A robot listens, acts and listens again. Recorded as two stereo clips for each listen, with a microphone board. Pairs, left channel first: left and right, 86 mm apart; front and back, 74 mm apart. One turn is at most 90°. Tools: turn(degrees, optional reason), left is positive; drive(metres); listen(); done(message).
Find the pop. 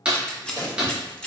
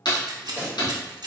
turn(degrees=-60, reason="The pop: 60° right.")
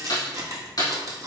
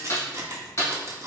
done("Facing where the pop came from. I can't hear it now.")